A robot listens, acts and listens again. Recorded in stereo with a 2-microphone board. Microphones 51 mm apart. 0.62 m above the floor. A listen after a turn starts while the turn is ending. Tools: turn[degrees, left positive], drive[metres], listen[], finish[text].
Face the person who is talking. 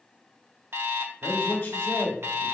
Thought: The man speaking: about 45° left or 135° left.
Action: turn[45]
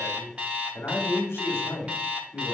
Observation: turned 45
Thought: So it is at 80° left.
Action: turn[80]
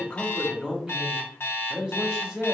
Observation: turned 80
Thought: The man speaking is now 20° right.
Action: turn[-20]
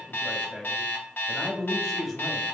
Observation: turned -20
Action: finish[Facing the man speaking.]